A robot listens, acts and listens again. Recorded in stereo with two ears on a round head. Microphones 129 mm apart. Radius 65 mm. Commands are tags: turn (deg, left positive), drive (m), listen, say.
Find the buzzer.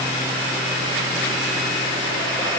<listen/>
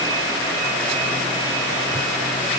<listen/>
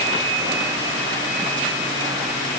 <say>I can't make out a buzzer.</say>